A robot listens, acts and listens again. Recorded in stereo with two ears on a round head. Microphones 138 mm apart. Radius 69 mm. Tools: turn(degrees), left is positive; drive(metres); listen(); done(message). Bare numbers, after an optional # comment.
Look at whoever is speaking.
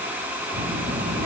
# The child speaking: about 65° right or 115° right.
turn(-65)
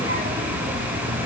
# So it is at 55° right.
turn(-55)
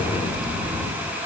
done("Found it: a child speaking, straight ahead.")